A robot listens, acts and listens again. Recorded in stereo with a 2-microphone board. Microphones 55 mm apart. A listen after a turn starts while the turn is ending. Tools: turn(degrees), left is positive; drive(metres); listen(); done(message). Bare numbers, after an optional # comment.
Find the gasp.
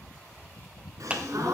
turn(-90)
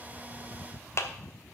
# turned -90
done("Facing where the gasp came from. I can't hear it now.")